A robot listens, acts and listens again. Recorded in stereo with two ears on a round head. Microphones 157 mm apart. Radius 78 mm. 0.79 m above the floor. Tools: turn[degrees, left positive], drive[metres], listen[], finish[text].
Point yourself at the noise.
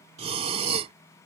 Thought: The breathing: about 35° right or 145° right.
Action: turn[-35]
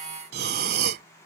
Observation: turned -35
Thought: So it is at 105° right.
Action: turn[-105]
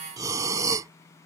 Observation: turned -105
Thought: The breathing is now 25° right.
Action: turn[-25]
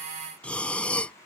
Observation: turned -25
Thought: The breathing is now 10° left.
Action: turn[10]
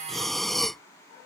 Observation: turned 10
Action: finish[Found it: breathing, straight ahead.]